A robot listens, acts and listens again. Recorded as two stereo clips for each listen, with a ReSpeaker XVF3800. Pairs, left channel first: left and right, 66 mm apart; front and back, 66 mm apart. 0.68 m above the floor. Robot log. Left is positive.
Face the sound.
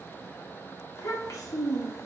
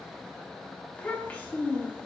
note: The child speaking: 65° left.
cmd yaw +65
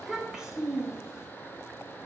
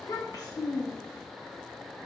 note: The child speaking is now 10° right.
cmd yaw -10
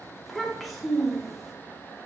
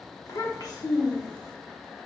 end: Found it: a child speaking, straight ahead, 1 to 2 m away.